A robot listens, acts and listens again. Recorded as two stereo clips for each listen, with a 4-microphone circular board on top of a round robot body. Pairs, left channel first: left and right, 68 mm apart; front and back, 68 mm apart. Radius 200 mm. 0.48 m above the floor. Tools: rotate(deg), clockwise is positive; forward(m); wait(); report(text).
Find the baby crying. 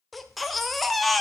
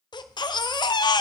report("Facing the baby crying, under 1 m away.")